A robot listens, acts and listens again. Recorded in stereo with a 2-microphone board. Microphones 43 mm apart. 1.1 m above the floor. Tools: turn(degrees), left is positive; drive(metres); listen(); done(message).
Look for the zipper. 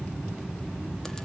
listen()
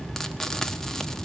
listen()
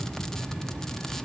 done("I can't make out a zipper, only frying.")